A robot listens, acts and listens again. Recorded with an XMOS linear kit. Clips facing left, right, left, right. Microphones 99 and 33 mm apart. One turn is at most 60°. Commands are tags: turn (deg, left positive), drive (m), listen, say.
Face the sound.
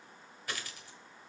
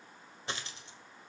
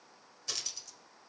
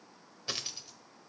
<turn deg="-25"/>
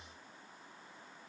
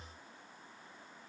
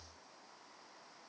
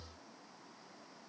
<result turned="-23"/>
<listen/>
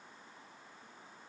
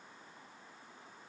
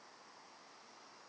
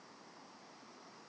<say>I heard a dropped coin, but can't make it out now. It was about straight ahead or 130° right.</say>